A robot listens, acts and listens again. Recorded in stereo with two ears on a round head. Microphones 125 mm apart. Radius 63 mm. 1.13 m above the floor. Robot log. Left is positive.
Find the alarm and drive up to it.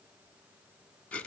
cmd idle
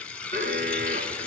note: The alarm: about 55° right or 125° right.
cmd yaw -55
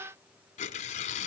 cmd idle
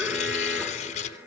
note: So it is at 15° right.
cmd yaw -15
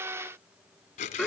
cmd fwd 1.0
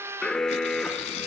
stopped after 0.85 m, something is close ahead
end: Arrived at the alarm, straight ahead.